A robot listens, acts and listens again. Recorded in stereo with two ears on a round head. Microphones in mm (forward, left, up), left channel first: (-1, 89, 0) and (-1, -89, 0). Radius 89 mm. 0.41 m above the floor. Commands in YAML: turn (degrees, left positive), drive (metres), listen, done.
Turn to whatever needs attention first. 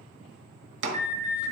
turn: -35
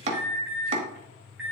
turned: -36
done: "Found it: an alarm, straight ahead, 2 to 4 m away."